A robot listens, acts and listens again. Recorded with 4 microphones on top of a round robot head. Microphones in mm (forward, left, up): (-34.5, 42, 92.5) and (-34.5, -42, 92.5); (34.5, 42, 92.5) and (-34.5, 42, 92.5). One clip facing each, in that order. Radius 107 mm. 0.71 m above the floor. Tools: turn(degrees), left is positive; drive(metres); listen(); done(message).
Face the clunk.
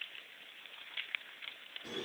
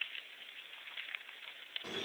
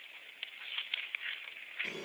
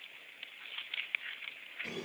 listen()
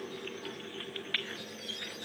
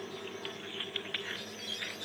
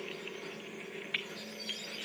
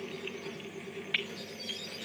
listen()
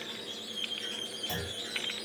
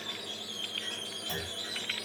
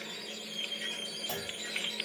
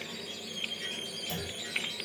done("Facing the clunk, 1 to 2 m away.")